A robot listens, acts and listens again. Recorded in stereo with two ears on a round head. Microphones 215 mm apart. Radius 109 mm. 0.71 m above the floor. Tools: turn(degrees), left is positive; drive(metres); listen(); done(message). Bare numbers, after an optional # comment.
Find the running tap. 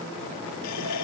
turn(90)
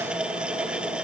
done("Facing the running tap.")